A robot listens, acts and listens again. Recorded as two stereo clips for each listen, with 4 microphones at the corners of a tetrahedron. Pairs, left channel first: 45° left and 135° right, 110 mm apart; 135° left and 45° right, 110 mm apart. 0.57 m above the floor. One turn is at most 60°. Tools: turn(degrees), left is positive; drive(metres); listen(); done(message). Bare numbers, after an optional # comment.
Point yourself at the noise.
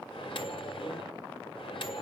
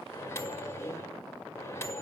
# The microwave: 75° left.
turn(60)
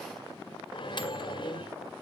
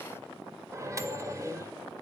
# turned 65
# The microwave is now 10° left.
turn(10)
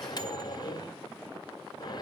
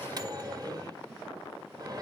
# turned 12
done("Facing the microwave.")